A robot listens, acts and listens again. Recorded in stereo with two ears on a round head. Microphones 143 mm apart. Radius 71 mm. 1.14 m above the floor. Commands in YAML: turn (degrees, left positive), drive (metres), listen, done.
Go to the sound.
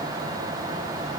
listen: true
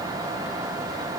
listen: true
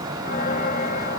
turn: 55
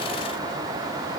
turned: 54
listen: true
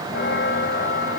turn: 70
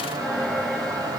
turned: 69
drive: 1.0
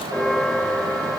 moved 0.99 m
drive: 1.0
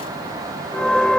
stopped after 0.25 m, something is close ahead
done: "Something is in my way. I am facing the bell but have not reached it."